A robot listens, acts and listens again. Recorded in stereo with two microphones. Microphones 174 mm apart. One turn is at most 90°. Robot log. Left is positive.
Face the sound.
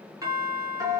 note: The doorbell: about 20° right or 160° right.
cmd yaw -20
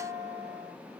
end: Found it: a doorbell, straight ahead, 1 to 2 m away.